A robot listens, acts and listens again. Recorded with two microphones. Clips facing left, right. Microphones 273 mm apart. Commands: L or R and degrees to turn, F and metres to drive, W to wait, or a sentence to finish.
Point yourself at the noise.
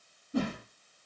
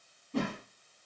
L30
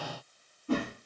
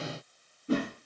R25
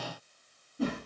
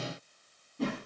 Facing the whoosh.